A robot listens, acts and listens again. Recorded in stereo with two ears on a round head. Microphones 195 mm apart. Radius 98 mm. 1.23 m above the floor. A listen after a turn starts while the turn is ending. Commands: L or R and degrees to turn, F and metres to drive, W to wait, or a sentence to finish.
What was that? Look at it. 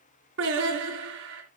R55
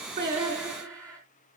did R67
Found it: singing, straight ahead.